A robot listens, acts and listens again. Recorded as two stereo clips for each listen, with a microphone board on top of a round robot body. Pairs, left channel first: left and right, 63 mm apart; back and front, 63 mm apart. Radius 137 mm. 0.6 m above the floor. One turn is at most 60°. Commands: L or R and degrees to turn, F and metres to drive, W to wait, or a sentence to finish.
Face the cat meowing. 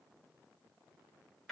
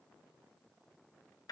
W
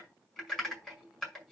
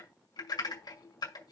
W
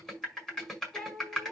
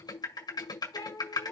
L60
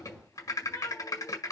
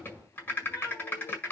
L60
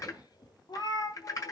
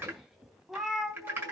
L60
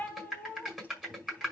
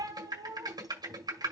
L20
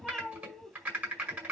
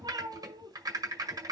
Facing the cat meowing.